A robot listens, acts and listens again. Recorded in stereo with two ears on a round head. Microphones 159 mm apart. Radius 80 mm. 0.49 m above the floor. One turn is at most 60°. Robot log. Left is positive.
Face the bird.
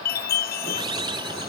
note: The bird: about 25° right or 155° right.
cmd yaw -25
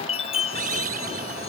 note: So it is at 130° right.
cmd yaw -60
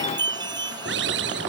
note: The bird is now 70° right.
cmd yaw -60
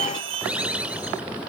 end: Found it: a bird, straight ahead.